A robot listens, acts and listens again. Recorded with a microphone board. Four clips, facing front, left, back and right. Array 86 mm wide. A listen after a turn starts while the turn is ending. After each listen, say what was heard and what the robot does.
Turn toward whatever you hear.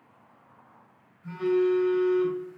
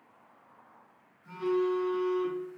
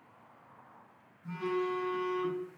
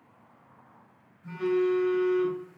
The phone buzzing: 30° right. Turn 30° right.
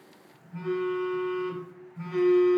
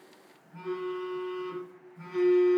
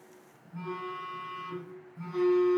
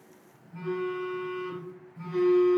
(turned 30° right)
Found it: a phone buzzing, straight ahead.